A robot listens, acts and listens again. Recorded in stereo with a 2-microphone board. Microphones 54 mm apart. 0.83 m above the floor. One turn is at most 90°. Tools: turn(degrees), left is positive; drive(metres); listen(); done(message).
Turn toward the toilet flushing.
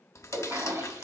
turn(degrees=-70)
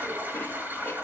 turn(degrees=-35)
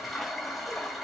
done("Found it: a toilet flushing, straight ahead.")